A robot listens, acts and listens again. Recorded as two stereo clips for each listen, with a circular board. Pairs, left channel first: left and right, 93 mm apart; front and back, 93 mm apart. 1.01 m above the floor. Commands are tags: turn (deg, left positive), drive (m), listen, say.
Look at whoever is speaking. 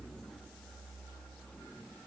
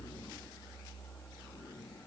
<listen/>
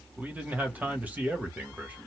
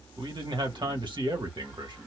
<turn deg="-160"/>
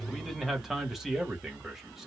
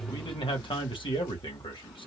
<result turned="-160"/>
<say>Found it: a man speaking, straight ahead.</say>